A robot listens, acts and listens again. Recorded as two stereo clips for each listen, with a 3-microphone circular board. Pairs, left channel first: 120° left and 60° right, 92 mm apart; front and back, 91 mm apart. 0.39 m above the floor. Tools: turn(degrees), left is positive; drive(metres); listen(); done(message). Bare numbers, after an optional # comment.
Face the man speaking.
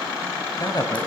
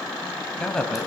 # The man speaking: 80° left.
turn(80)
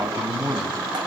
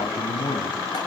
done("Found it: a man speaking, straight ahead, 2 to 4 m away.")